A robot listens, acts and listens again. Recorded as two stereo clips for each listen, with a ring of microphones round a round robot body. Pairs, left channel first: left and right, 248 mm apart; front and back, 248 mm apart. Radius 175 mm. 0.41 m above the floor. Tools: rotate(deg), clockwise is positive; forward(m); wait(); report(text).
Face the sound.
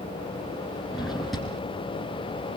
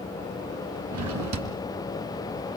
rotate(-180)
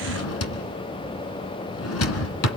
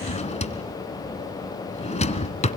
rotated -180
rotate(-65)
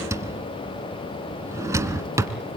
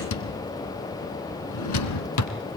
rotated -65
rotate(10)
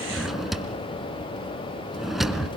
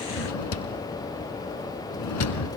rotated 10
report("Found it: a drawer, straight ahead, 1 to 2 m away.")